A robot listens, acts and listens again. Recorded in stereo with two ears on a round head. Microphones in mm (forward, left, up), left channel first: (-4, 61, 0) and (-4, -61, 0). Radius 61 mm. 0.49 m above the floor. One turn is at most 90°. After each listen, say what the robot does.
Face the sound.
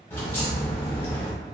Turn 15° left.
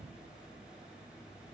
Keep listening.
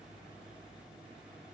I heard a crack, but can't make it out now. It was about straight ahead or 150° left.